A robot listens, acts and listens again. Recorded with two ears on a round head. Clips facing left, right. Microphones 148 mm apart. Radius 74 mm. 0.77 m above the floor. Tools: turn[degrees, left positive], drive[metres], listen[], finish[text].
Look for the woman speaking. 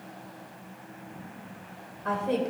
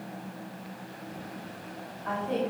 Thought: The woman speaking: about 70° left or 110° left.
Action: turn[70]
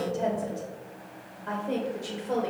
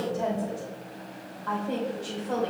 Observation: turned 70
Thought: So it is at 15° left.
Action: turn[15]
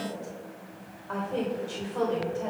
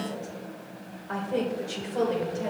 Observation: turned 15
Thought: The woman speaking is now 20° right.
Action: turn[-20]
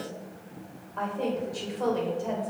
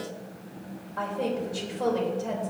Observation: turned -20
Action: finish[Facing the woman speaking.]